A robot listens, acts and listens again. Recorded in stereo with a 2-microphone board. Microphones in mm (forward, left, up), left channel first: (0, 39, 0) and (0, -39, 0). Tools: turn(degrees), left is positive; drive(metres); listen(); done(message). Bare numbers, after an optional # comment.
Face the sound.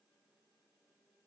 listen()
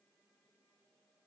listen()
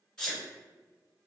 turn(30)
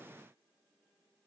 listen()
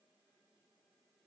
done("I heard a sneeze, but can't make it out now. It was about 20° right or 140° left.")